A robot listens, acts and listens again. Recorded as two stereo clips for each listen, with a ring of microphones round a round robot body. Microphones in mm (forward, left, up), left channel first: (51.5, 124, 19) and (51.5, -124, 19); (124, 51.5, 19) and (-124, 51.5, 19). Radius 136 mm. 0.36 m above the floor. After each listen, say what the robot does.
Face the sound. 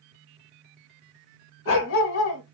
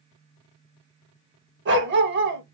Turn 135° left.
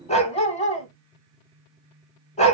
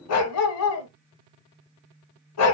Turn 25° left.
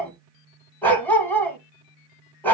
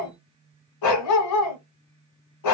Facing the dog barking, 1 to 2 m away.